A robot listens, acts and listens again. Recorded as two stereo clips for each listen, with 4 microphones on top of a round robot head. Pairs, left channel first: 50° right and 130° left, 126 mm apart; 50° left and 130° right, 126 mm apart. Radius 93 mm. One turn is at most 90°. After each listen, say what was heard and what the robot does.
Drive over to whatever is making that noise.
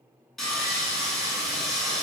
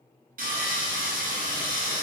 The sawing: 140° right. Turn 90° right.
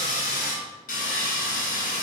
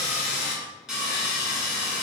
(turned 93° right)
The sawing is now 45° right. Turn 45° right.
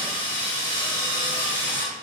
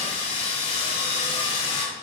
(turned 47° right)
Drive 1.0 m forward.
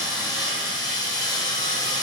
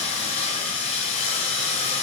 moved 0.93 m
The sawing is now 10° left. Turn 10° left.
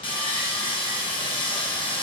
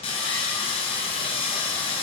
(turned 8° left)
Drive 1.0 m forward.
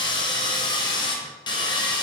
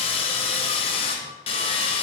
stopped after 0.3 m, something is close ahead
Arrived at the sawing, straight ahead.